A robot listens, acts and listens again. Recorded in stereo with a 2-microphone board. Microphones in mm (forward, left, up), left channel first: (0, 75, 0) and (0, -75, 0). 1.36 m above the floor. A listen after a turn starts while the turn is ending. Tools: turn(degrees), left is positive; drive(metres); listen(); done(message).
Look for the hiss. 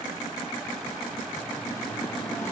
listen()
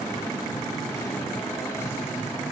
listen()
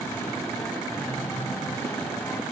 done("I can't make out a hiss, only singing.")